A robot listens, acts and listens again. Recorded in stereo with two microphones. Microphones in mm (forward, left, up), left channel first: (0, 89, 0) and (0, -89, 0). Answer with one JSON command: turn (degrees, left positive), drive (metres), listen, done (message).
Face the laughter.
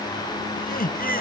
{"turn": 55}
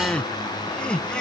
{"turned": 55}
{"done": "Found it: laughter, straight ahead."}